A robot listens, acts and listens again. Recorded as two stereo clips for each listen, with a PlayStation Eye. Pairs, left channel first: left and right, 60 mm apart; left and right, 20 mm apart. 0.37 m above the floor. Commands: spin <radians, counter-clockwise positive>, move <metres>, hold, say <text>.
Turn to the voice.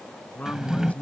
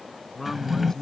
spin 0.44
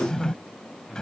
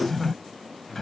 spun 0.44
say Found it: a man speaking, straight ahead.